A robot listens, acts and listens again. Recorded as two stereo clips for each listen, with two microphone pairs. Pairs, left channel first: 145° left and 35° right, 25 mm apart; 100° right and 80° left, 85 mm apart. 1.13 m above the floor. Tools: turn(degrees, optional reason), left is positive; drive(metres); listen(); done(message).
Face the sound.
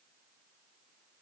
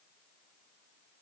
listen()
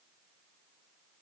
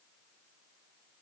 listen()
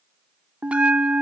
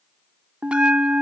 done("Facing the bell.")